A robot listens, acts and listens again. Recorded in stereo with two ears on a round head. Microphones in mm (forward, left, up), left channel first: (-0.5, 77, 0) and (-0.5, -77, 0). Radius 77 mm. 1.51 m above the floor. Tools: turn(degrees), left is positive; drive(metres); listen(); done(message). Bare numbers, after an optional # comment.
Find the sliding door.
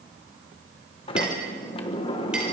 # The sliding door: about 30° left or 150° left.
turn(30)
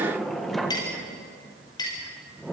done("Facing the sliding door.")